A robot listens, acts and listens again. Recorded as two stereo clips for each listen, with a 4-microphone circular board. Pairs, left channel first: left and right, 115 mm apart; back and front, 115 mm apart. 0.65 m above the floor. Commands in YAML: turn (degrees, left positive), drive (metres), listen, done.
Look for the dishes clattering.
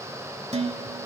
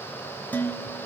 turn: -105
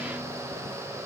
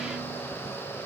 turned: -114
turn: 10
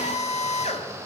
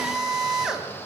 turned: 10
listen: true
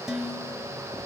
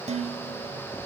done: "Facing the dishes clattering, 1 to 2 m away."